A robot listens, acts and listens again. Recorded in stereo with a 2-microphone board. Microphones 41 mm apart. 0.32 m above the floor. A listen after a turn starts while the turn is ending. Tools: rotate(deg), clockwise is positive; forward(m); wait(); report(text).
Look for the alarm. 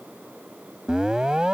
rotate(20)
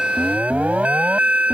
rotate(140)
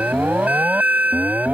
rotate(55)
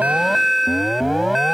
report("Facing the alarm.")